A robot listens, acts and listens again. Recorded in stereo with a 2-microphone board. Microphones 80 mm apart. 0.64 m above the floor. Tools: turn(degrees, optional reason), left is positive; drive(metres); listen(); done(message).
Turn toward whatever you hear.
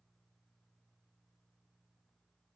listen()
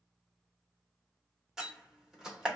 turn(degrees=-30)
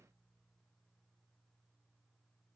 listen()
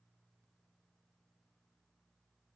done("I heard a door slam, but can't make it out now. It was about 25° left or 145° right.")